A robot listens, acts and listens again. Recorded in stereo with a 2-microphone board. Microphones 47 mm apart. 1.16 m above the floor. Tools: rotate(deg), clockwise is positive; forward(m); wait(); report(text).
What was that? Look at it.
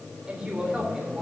rotate(30)
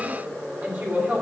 rotate(145)
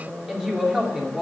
rotate(10)
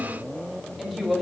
report("Found it: a woman speaking, straight ahead, 2 to 4 m away.")